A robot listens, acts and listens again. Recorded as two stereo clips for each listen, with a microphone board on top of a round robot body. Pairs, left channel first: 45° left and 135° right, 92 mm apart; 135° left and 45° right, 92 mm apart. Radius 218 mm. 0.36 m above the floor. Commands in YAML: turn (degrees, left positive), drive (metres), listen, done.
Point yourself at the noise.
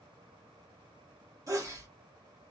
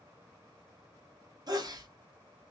turn: -85
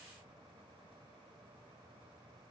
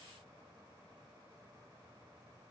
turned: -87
done: "Facing where the sneeze came from. I can't hear it now."